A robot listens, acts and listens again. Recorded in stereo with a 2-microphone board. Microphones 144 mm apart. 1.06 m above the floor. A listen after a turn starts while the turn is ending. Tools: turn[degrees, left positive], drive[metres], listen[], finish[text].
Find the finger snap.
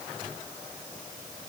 Action: listen[]
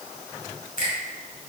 Action: turn[90]
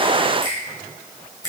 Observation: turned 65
Thought: So it is at 25° left.
Action: turn[25]
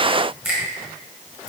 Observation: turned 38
Thought: The finger snap is now 10° right.
Action: turn[-10]
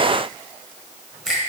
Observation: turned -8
Action: finish[Facing the finger snap, 2 to 4 m away.]